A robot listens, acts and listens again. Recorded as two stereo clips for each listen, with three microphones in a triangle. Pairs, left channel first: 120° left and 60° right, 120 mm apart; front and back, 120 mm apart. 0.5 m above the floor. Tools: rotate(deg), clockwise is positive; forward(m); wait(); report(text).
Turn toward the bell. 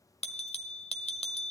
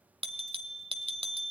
rotate(-145)
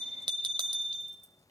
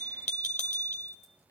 rotate(10)
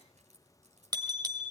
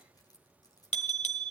report("Found it: a bell, straight ahead.")